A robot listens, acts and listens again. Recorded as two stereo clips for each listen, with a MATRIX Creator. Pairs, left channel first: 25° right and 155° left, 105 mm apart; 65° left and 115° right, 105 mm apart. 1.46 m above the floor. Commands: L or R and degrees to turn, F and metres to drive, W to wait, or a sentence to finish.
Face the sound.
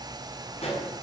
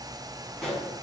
R20
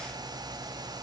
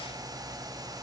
I heard a pop from this way, but can't make it out now.